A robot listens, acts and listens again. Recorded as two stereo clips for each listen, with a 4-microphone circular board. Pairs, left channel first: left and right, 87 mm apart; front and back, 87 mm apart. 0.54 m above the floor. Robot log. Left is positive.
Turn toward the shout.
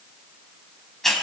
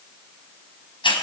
cmd idle
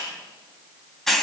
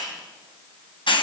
cmd idle
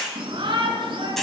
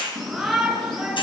note: The shout: 90° right.
cmd yaw -90
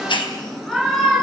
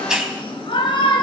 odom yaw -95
end: Found it: a shout, straight ahead, over 4 m away.